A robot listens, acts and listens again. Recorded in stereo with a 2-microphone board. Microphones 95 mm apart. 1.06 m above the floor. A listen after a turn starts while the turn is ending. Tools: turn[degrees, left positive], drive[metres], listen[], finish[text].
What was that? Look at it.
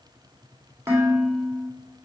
Thought: The dishes clattering: about 30° right or 150° right.
Action: turn[-30]
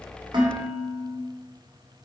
Thought: So it is at 120° right.
Action: turn[-120]
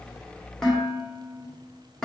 Action: finish[Found it: dishes clattering, straight ahead.]